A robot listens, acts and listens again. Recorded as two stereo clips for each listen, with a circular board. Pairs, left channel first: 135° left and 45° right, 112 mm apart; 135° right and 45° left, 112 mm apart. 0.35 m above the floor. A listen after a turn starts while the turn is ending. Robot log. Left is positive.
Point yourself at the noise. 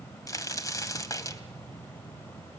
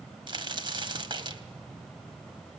note: The crack: 80° left.
cmd yaw +80
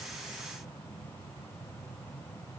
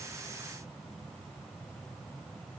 end: Facing where the crack came from. I can't hear it now.